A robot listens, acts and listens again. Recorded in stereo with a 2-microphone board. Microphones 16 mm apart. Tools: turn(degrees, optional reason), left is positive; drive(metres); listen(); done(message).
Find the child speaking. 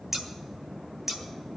listen()
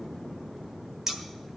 listen()
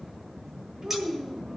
turn(degrees=-30, reason="The child speaking: about 30° right or 150° right.")
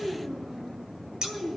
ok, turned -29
turn(degrees=-135, reason="So it is at 135° right.")
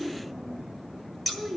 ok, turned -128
turn(degrees=-10, reason="The child speaking is now 10° right.")
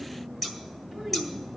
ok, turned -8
done("Facing the child speaking.")